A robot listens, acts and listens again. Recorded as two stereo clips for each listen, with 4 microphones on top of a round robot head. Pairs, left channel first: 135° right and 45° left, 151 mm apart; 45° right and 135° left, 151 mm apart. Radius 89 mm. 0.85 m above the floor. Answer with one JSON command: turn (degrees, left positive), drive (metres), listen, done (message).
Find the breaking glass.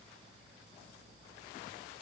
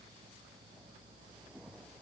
{"listen": true}
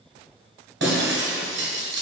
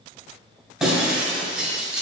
{"turn": 50}
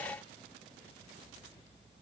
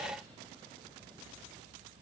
{"done": "I heard breaking glass from this way, but can't make it out now."}